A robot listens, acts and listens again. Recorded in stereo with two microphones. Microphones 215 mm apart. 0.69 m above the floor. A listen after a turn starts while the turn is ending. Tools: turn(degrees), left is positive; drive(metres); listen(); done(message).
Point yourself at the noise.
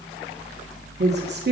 turn(degrees=-50)
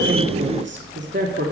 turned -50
turn(degrees=-70)
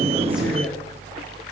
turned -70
listen()
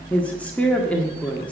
done("Facing the woman speaking, 1 to 2 m away.")